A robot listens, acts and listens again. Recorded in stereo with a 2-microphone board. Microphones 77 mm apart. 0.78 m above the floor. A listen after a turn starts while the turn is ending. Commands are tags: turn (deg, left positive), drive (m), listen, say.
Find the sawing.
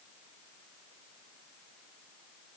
<listen/>
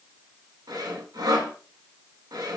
<turn deg="-70"/>
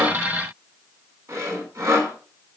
<turn deg="-40"/>
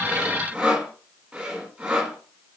<turn deg="-10"/>
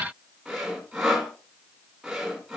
<say>Found it: sawing, straight ahead.</say>